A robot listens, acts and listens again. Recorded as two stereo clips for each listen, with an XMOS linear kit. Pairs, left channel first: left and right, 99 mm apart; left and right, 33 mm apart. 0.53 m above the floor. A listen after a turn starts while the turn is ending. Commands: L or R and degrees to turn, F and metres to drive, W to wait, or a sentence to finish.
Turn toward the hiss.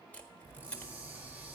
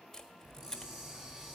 R20
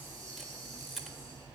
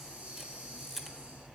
R140
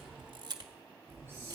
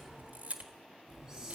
R20
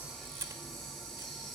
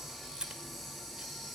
Facing the hiss, over 4 m away.